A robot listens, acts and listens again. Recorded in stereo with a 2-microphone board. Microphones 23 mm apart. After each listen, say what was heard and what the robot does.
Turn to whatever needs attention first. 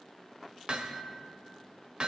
Keep listening.
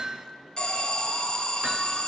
The alarm: about 35° left or 145° left. Turn 35° left.
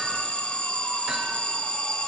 So it is at 110° left. Turn 110° left.
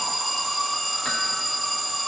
Facing the alarm.